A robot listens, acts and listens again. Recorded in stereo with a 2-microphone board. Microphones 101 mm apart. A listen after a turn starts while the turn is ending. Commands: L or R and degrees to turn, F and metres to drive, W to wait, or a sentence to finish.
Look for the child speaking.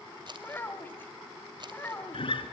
L20
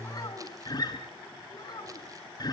L135
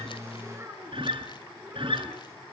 R30
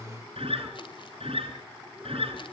W
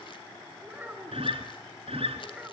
R15
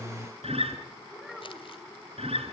Found it: a child speaking, straight ahead.